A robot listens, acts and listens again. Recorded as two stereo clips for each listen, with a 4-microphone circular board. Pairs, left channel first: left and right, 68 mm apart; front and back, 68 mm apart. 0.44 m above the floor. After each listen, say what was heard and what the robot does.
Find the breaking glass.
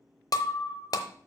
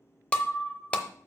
The breaking glass: 75° left. Turn 75° left.
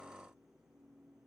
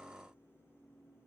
Facing where the breaking glass came from. I can't hear it now.